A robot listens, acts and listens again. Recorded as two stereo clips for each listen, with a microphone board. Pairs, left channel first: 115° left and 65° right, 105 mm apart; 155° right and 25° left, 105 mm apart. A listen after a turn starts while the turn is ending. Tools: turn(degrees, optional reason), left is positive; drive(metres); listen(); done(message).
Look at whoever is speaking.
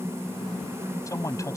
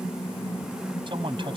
turn(degrees=55, reason="The man speaking: 55° left.")
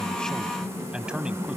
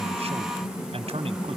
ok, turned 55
turn(degrees=15, reason="The man speaking is now 15° left.")
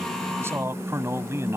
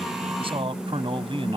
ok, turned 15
done("Found it: a man speaking, straight ahead.")